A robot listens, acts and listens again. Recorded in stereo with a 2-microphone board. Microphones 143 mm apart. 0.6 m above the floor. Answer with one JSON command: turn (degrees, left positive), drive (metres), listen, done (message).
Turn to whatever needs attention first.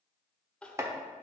{"turn": 30}
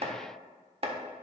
{"listen": true}
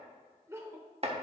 {"turn": -20}
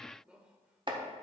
{"done": "Found it: crying, straight ahead."}